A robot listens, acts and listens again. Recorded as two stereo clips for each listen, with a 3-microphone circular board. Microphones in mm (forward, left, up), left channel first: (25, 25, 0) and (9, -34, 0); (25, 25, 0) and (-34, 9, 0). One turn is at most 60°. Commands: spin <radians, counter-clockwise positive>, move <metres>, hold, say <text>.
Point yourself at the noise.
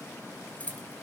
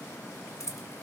spin 0.26
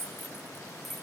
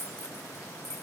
spin -0.26
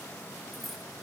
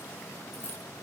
hold
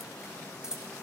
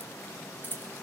spin -0.44
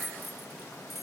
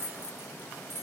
spin -0.26
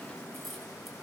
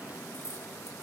spin -0.17
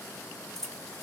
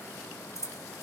say Found it: keys jangling, straight ahead.